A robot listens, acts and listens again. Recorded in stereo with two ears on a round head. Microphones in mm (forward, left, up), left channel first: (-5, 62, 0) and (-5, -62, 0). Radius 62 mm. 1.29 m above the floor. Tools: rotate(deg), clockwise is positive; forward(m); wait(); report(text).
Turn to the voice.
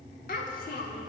rotate(-70)
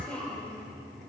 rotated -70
rotate(-10)
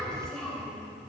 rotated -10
report("Facing the child speaking, 2 to 4 m away.")